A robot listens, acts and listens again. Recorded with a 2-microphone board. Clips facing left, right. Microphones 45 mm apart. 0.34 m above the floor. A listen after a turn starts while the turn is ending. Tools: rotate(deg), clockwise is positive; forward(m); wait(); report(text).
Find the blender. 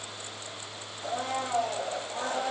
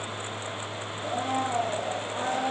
rotate(20)
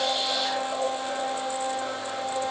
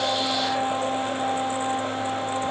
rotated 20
rotate(135)
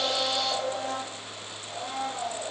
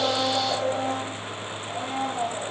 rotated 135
rotate(30)
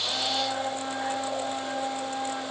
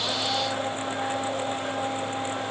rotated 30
rotate(-10)
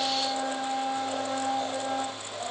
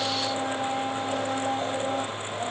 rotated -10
report("Found it: a blender, straight ahead.")